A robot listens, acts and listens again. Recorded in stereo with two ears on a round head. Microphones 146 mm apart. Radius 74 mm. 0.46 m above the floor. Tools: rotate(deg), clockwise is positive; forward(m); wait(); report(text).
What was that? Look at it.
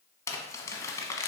rotate(-20)
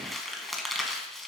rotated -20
report("Facing the crumpling.")